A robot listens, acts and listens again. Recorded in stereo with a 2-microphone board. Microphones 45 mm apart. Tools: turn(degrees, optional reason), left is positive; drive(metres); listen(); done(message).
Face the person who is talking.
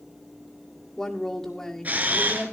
turn(degrees=30)
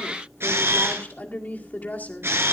turn(degrees=140, reason="So it is at 140° left.")
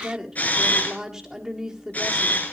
turn(degrees=-10, reason="The woman speaking is now 10° right.")
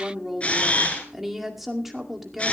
done("Found it: a woman speaking, straight ahead, 2 to 4 m away.")